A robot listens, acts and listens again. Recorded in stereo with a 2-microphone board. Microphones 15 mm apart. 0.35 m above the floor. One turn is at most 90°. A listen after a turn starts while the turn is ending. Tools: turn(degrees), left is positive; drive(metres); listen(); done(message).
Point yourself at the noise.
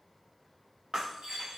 turn(degrees=-60)
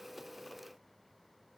listen()
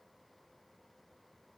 done("I heard breaking glass, but can't make it out now. It was about straight ahead or 60° right.")